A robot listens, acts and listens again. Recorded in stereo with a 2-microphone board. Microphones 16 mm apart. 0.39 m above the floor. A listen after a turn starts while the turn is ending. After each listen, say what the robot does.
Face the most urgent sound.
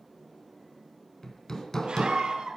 Turn 90° right.
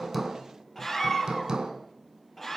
Turn 10° left.
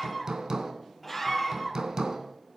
Facing the scream, over 4 m away.